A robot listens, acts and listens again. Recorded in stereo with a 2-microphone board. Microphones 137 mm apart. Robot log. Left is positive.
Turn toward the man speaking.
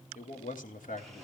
cmd yaw +90
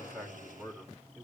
note: So it is at 15° right.
cmd yaw -15
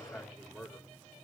end: Facing the man speaking, over 4 m away.